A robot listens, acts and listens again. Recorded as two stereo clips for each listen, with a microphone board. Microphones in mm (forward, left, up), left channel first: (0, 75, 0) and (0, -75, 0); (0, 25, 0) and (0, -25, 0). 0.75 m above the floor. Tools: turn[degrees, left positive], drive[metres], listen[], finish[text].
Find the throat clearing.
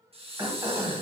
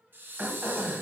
Thought: The throat clearing: about 25° right or 155° right.
Action: turn[-25]
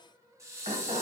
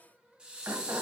Thought: So it is at 125° right.
Action: turn[-125]
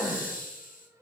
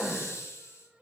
Action: finish[Facing the throat clearing, under 1 m away.]